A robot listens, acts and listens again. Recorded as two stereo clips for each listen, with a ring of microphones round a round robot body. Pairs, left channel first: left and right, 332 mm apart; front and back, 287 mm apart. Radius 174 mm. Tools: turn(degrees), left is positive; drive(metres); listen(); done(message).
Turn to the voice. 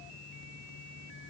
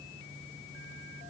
listen()
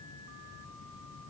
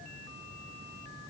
listen()
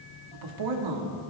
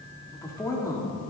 turn(degrees=-80)
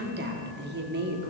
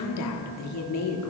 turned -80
turn(degrees=-30)
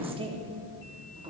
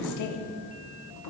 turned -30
turn(degrees=-15)
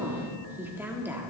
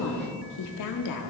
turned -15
done("Found it: a woman speaking, straight ahead.")